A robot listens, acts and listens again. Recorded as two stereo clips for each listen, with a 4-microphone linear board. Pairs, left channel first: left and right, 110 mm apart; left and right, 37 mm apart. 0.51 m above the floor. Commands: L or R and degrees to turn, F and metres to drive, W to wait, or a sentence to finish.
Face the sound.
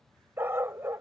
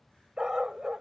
R25
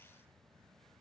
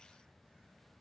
W
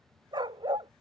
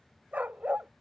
R130
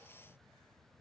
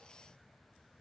W
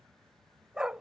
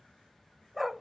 Found it: a dog barking, straight ahead.